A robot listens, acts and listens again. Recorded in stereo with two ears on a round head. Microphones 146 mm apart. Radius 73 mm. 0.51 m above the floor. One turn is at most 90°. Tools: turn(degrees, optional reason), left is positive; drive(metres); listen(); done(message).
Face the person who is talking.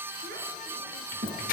turn(degrees=-55, reason="The child speaking: about 55° right or 125° right.")
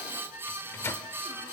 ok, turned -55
listen()
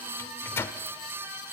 listen()
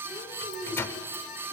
turn(degrees=10, reason="So it is at 10° left.")
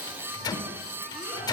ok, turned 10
listen()
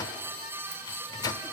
listen()
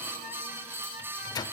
done("Facing where the child speaking came from. I can't hear it now.")